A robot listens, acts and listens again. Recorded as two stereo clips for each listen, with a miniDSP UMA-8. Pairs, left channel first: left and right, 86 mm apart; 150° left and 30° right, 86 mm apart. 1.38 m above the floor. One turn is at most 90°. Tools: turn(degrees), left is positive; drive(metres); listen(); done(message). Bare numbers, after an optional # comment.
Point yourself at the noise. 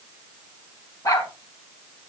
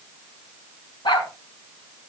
# The dog barking: 135° left.
turn(90)
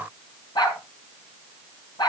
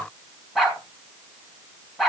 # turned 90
# The dog barking is now 55° left.
turn(55)
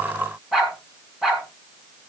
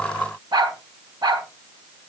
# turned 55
done("Facing the dog barking, 2 to 4 m away.")